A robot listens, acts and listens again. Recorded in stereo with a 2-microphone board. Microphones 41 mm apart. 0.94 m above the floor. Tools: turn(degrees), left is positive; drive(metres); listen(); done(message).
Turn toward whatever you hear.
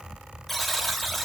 turn(degrees=30)
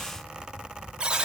turn(degrees=-25)
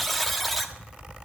done("Facing the buzzer, 1 to 2 m away.")